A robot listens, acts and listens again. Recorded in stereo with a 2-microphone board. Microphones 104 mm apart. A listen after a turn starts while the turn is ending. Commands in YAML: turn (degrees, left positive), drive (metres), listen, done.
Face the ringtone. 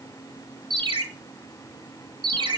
turn: -50
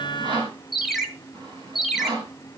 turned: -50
done: "Found it: a ringtone, straight ahead."